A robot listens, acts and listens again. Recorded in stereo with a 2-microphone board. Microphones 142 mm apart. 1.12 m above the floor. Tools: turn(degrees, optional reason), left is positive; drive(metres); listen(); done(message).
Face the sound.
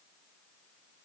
listen()
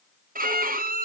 turn(degrees=-90)
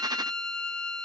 done("Found it: a violin, straight ahead, under 1 m away.")